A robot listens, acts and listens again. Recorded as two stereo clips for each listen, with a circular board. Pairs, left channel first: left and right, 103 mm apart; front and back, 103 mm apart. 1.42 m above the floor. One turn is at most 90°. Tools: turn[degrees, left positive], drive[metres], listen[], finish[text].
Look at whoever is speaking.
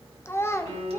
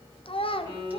Thought: The child speaking: 25° left.
Action: turn[25]
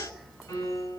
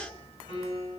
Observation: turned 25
Action: listen[]
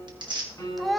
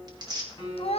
Action: finish[Facing the child speaking.]